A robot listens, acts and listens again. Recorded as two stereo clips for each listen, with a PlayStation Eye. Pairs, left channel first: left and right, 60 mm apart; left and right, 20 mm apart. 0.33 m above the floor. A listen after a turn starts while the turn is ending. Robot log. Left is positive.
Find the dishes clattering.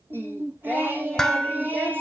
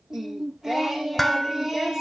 cmd yaw +30
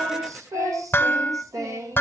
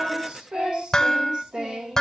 note: So it is at 140° left.
cmd yaw +140
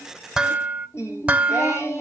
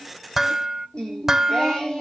note: The dishes clattering is now 25° right.
cmd yaw -25
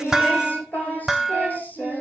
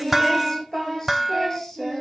end: Facing the dishes clattering.